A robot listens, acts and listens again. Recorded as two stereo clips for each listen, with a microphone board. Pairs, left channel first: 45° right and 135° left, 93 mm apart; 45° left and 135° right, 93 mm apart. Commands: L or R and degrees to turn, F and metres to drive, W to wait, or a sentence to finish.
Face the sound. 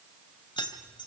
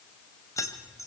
R10
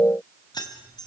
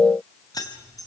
Facing the keys jangling, 2 to 4 m away.